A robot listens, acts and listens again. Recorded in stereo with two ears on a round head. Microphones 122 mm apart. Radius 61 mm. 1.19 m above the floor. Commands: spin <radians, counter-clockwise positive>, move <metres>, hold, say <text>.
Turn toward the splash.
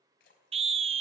spin 1.57
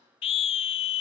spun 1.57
say I heard a splash from this way, but can't make it out now.